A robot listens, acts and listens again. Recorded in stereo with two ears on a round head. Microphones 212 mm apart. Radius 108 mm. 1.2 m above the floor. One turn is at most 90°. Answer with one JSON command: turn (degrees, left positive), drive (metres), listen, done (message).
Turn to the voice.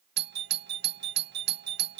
{"listen": true}
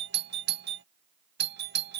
{"listen": true}
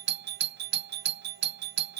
{"done": "I can't make out anyone speaking, only a doorbell."}